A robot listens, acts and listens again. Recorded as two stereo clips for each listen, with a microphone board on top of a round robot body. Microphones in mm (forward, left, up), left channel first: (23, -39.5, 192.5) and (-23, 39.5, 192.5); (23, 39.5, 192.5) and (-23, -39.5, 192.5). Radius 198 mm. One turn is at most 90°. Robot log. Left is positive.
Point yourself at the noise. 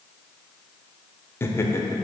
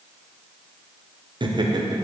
note: The laughter: 110° right.
cmd yaw -90
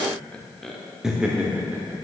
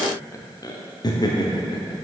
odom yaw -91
note: The laughter is now 55° left.
cmd yaw +55
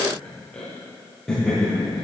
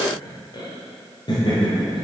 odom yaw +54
note: The laughter is now 30° left.
cmd yaw +30
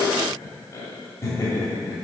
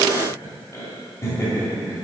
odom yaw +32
end: Found it: laughter, straight ahead, 2 to 4 m away.